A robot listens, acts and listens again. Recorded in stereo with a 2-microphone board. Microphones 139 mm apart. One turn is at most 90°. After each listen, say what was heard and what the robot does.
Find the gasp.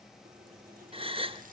The gasp: about 40° right or 140° right. Turn 40° right.
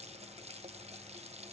Keep listening.
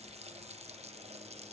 I heard a gasp, but can't make it out now. It was about straight ahead or 100° right.